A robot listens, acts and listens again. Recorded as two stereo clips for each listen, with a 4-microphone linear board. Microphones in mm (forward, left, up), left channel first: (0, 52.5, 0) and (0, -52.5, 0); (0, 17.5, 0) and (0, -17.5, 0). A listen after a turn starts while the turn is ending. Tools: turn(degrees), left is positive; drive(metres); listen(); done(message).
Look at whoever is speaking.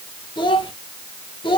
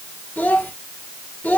turn(degrees=50)
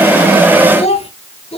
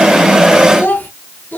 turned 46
turn(degrees=80)
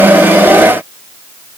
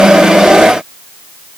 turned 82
listen()
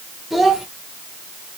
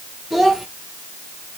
done("Found it: a child speaking, straight ahead.")